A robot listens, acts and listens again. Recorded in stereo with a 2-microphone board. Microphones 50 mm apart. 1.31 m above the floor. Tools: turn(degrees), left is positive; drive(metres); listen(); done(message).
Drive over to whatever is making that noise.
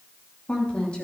turn(degrees=20)
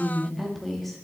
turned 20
drive(metres=1.0)
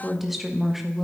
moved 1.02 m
drive(metres=1.0)
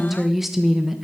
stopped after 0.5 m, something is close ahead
done("I am next to the woman speaking.")